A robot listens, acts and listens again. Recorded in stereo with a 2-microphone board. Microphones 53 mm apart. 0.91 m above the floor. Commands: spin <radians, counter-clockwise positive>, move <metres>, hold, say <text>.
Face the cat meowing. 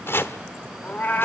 spin 0.61
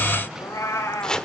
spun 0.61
spin 1.92
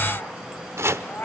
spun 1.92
spin 0.70
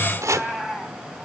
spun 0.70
say Facing the cat meowing, over 4 m away.